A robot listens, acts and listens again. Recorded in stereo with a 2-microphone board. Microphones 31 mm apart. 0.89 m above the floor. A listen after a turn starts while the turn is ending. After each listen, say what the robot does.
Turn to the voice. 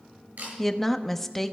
Turn 30° left.
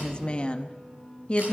Turn 140° left.
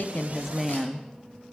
Turn 10° right.
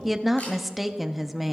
Found it: a woman speaking, straight ahead, under 1 m away.